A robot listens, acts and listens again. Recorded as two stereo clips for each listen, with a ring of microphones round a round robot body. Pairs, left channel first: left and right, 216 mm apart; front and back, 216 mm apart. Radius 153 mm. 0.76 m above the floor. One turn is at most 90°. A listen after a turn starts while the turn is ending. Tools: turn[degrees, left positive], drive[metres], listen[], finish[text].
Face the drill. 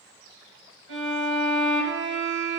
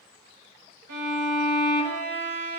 Action: listen[]
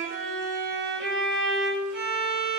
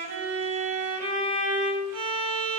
Action: listen[]
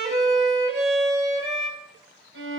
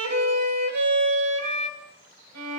Action: finish[I can't make out a drill to turn to.]